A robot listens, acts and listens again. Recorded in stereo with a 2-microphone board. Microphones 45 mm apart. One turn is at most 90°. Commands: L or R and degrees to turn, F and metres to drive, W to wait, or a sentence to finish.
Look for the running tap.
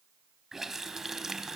R30
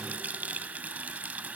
R90
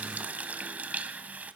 R40
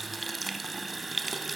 Facing the running tap, 1 to 2 m away.